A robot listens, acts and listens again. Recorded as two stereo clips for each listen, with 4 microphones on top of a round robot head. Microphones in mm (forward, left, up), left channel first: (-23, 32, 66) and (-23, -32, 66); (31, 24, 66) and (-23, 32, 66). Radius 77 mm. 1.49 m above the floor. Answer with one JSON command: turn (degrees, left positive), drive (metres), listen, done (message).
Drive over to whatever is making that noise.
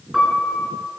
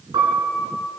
{"turn": 180}
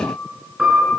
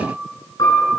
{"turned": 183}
{"drive": 1.0}
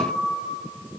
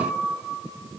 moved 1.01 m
{"listen": true}
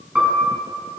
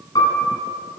{"drive": 1.0}
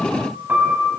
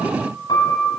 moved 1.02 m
{"turn": -20}
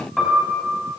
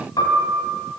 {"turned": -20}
{"drive": 1.0}
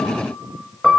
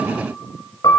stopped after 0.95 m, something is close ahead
{"done": "Arrived at the piano, straight ahead."}